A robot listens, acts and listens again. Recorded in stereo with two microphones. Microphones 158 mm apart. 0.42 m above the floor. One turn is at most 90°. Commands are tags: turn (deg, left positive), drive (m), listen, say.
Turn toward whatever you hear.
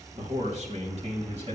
<turn deg="-45"/>
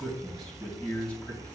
<turn deg="10"/>
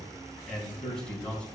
<turn deg="10"/>
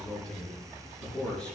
<say>Facing the man speaking.</say>